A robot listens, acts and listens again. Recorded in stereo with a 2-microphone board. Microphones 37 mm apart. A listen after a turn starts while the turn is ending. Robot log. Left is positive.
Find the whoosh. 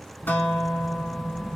note: The whoosh: about 25° left or 155° left.
cmd yaw +25
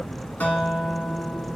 note: So it is at 130° left.
cmd yaw +130
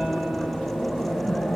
note: The whoosh is now 50° left.
cmd yaw +50
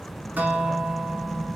note: The whoosh is now 15° left.
cmd yaw +15
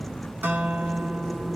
end: Facing the whoosh, 2 to 4 m away.